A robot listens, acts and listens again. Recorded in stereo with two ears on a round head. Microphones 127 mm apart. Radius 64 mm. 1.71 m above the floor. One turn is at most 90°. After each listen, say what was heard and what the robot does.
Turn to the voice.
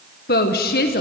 Turn 90° left.
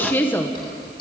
So it is at 15° left. Turn 15° left.
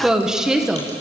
Found it: a woman speaking, straight ahead, 1 to 2 m away.